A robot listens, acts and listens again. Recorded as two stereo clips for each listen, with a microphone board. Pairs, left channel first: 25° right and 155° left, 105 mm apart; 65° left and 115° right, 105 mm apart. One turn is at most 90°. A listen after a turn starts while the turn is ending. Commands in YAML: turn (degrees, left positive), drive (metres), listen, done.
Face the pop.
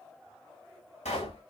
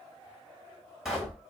turn: -25
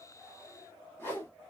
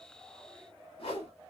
done: "Facing where the pop came from. I can't hear it now."